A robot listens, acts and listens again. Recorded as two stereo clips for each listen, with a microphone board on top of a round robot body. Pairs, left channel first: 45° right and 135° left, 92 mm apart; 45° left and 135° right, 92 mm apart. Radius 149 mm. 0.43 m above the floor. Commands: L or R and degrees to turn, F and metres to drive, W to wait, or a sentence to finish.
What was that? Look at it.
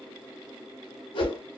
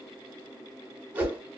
R65
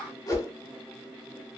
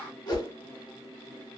Found it: a whoosh, straight ahead, 1 to 2 m away.